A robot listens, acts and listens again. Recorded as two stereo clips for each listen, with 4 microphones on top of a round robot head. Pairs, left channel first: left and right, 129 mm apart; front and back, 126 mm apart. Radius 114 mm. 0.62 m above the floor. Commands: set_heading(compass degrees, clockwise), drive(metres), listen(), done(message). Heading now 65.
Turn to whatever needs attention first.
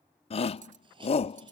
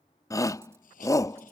set_heading(5)
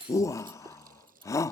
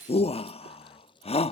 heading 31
set_heading(6)
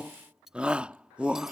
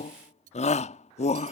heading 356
set_heading(6)
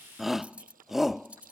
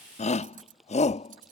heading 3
done("Facing the shout.")